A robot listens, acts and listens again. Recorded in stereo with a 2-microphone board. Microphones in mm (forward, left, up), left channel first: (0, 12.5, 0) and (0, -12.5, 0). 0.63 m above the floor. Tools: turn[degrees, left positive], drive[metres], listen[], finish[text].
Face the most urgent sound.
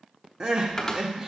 Thought: The crying: about 25° right or 155° right.
Action: turn[-25]
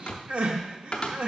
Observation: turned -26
Thought: So it is at 125° right.
Action: turn[-125]
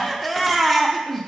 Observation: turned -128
Action: finish[Facing the crying.]